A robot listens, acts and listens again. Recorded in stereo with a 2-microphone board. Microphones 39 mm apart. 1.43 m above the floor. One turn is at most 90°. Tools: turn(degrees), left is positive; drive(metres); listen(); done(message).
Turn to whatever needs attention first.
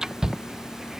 turn(degrees=-15)
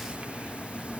listen()
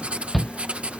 done("Facing the shout.")